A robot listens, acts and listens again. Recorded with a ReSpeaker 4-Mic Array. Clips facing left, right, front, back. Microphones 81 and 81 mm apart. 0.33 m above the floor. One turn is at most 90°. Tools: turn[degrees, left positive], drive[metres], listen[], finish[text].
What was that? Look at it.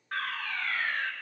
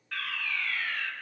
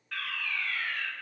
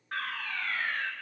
Thought: The fire alarm: 135° left.
Action: turn[90]
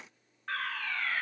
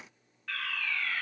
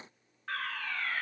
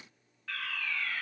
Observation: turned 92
Thought: The fire alarm is now 45° left.
Action: turn[45]
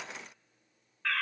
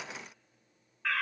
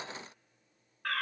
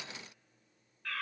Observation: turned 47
Action: finish[Facing the fire alarm.]